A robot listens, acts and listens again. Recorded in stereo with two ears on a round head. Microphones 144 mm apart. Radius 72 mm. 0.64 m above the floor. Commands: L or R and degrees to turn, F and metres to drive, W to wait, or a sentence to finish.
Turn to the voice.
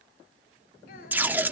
W
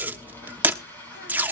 W
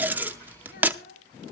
L60
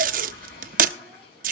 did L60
W
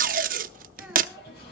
W
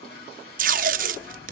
I heard a child speaking, but can't make it out now. It was about straight ahead or 60° left.